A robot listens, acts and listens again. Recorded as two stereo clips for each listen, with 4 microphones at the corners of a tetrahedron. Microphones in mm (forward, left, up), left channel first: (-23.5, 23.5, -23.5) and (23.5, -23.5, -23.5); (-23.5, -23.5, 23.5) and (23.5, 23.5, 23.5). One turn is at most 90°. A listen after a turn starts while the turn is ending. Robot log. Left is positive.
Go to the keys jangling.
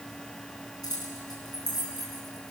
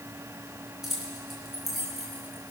note: The keys jangling: 130° left.
cmd yaw +90
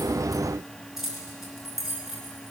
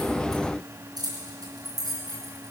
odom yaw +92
note: The keys jangling is now 40° left.
cmd yaw +40
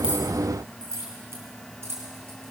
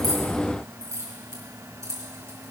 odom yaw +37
cmd fwd 1.0
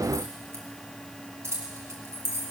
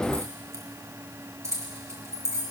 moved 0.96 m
cmd fwd 1.0
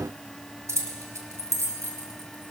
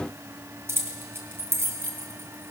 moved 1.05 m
cmd fwd 1.0
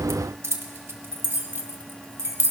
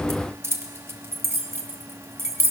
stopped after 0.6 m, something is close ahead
end: Arrived at the keys jangling, straight ahead.